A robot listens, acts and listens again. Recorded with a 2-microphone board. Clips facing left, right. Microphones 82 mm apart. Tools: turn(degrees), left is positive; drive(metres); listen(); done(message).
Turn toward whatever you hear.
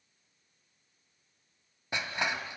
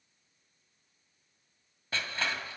turn(degrees=15)
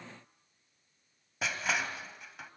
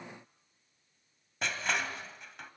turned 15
done("Facing the crushing, 1 to 2 m away.")